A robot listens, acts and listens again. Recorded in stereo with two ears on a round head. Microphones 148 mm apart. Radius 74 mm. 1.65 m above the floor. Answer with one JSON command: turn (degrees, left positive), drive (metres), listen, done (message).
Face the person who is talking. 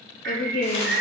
{"turn": 55}
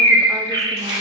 {"listen": true}
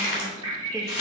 {"listen": true}
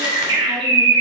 {"done": "I heard a woman speaking, but can't make it out now. It was about straight ahead or 70° left."}